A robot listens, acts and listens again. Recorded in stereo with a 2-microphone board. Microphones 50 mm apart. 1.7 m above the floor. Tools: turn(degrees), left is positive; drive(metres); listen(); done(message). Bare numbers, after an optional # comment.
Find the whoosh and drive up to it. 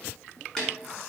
listen()
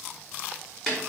listen()
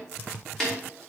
done("I can't make out a whoosh to turn to.")